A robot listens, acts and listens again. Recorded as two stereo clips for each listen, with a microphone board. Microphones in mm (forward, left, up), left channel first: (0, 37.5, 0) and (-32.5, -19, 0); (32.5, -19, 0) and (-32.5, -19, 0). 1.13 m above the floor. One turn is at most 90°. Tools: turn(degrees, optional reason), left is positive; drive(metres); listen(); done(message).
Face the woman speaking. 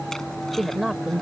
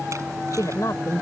turn(degrees=-35, reason="The woman speaking: 35° right.")
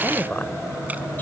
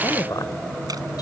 done("Found it: a woman speaking, straight ahead.")